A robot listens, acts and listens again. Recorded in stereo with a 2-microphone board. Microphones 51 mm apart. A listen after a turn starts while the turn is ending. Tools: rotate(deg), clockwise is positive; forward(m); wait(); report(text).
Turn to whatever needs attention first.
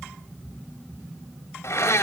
wait()
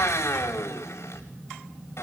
wait()
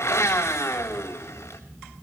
report("I can't make out anything urgent to turn to.")